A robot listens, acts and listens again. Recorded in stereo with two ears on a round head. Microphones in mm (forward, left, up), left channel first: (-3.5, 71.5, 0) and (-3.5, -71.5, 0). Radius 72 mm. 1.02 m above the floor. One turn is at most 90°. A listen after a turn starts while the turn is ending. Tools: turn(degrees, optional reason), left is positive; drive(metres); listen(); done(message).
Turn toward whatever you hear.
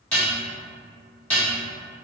turn(degrees=30)
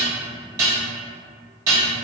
turn(degrees=-25, reason="So it is at 25° right.")
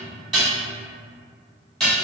done("Facing the dishes clattering, 1 to 2 m away.")